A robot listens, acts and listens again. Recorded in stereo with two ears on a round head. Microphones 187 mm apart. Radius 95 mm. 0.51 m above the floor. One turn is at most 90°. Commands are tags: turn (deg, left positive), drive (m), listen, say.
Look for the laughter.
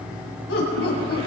<turn deg="55"/>
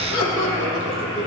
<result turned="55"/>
<turn deg="75"/>
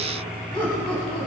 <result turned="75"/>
<turn deg="25"/>
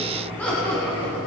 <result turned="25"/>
<turn deg="10"/>
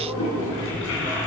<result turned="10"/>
<listen/>
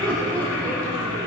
<say>Found it: laughter, straight ahead, over 4 m away.</say>